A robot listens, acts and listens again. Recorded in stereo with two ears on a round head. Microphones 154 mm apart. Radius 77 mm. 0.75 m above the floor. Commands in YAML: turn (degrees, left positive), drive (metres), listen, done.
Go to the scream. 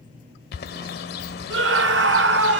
turn: -90
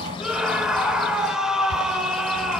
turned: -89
drive: 1.0
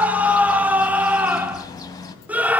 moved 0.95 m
turn: -10
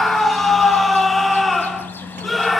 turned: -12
drive: 1.0
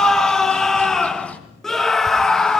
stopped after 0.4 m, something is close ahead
done: "Arrived at the scream, straight ahead."